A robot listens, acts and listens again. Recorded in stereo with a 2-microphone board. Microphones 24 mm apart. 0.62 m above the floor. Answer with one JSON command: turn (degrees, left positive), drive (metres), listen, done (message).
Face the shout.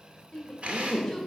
{"turn": 30}
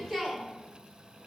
{"turn": -20}
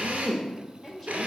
{"done": "Facing the shout, 1 to 2 m away."}